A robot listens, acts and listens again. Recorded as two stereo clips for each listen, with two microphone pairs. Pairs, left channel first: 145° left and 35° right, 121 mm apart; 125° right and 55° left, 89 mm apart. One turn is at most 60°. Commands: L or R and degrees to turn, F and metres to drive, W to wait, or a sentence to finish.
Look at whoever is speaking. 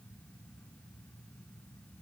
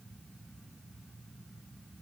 W
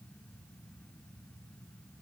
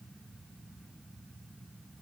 W
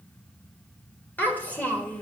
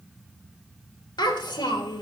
R60
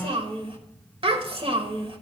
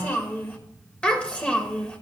R55
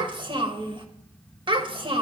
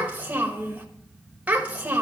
R15
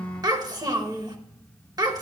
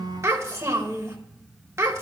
Facing the child speaking, 1 to 2 m away.